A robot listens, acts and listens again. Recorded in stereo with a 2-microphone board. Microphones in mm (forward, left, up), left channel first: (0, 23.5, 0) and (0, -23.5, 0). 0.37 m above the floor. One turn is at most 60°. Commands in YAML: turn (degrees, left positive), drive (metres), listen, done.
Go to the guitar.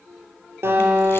turn: -60
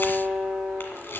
turn: -50
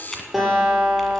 drive: 1.0
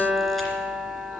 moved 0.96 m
drive: 1.0
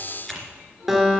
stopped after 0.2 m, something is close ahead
done: "Something is in my way. I am facing the guitar but have not reached it."